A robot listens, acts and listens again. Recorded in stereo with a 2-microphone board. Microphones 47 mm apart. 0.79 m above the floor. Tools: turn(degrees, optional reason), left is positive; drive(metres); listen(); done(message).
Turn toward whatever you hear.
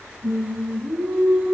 turn(degrees=-35, reason="The singing: about 35° right or 145° right.")
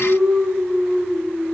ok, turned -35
done("Found it: singing, straight ahead.")